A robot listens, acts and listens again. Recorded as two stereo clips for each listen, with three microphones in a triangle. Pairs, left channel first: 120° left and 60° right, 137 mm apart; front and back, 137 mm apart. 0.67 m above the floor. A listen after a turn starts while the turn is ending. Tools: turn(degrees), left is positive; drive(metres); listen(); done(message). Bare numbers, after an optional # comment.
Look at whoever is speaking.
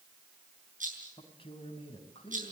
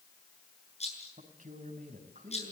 # The man speaking: 165° left.
turn(165)
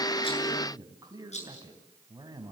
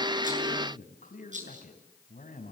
done("Found it: a man speaking, straight ahead, over 4 m away.")